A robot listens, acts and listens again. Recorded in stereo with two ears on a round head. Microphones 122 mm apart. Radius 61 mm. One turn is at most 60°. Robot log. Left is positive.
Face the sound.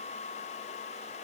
cmd idle
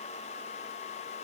cmd idle
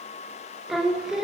cmd yaw -30
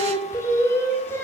note: So it is at 15° left.
cmd yaw +15
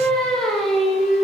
end: Found it: singing, straight ahead, 2 to 4 m away.